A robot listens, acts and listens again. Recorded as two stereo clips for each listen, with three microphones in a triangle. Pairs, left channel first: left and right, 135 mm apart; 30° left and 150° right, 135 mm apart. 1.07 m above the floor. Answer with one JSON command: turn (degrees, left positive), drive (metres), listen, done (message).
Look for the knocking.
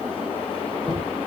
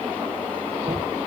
{"turn": 175}
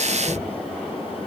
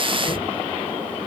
{"turn": -15}
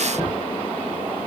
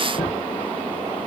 {"done": "Found it: knocking, straight ahead."}